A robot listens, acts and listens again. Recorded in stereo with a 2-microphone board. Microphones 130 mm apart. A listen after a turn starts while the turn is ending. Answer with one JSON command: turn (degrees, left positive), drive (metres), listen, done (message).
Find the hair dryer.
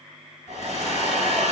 {"turn": 70}
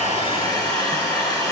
{"turn": 35}
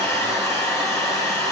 {"turn": 25}
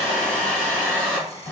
{"turn": 10}
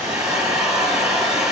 {"done": "Facing the hair dryer."}